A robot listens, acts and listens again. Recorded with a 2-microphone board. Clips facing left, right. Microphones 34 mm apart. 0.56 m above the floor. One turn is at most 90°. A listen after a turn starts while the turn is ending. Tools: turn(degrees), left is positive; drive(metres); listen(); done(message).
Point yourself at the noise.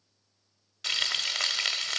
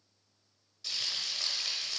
turn(degrees=90)
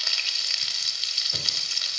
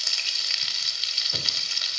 done("Facing the frying, under 1 m away.")